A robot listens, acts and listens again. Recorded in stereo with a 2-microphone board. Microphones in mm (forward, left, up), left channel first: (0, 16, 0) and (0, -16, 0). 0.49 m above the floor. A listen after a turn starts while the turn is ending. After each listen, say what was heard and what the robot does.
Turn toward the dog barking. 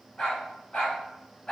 The dog barking: about 25° left or 155° left. Turn 25° left.
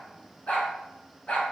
So it is at 125° left. Turn 125° left.
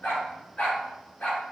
The dog barking is now 45° left. Turn 45° left.
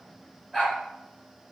Found it: a dog barking, straight ahead.